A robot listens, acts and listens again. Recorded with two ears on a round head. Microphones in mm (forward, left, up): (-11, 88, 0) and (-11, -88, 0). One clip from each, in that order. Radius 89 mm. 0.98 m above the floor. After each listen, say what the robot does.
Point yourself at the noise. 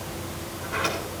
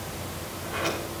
Turn 45° left.
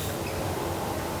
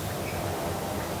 Turn 90° left.
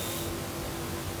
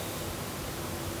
Keep listening.
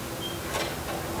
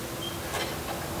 Found it: a sliding door, straight ahead.